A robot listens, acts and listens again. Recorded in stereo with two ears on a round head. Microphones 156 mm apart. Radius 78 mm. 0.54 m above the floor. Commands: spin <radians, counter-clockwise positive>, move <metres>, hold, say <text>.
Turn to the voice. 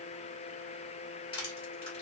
hold
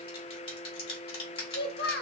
spin 1.05
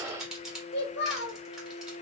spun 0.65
spin 1.31
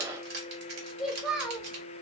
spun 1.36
say Facing the child speaking.